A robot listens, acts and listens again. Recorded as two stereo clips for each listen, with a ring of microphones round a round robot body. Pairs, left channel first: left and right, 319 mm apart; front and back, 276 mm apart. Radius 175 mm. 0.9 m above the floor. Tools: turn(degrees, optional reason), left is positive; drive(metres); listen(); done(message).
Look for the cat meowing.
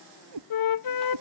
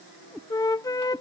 turn(degrees=-95, reason="The cat meowing: 95° right.")
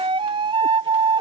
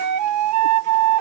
listen()
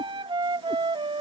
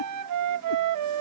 listen()
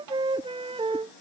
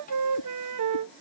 done("Facing where the cat meowing came from. I can't hear it now.")